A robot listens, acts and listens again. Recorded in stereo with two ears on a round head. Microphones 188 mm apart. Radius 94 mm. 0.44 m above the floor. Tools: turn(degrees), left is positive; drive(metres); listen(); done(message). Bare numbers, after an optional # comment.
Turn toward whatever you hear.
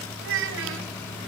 # The child speaking: about 65° right or 115° right.
turn(-65)
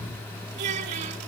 # So it is at 35° right.
turn(-35)
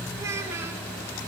# The child speaking is now 15° right.
turn(-15)
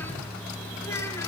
listen()
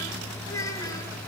# The child speaking is now 15° left.
turn(15)
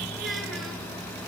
listen()
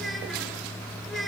done("Facing the child speaking.")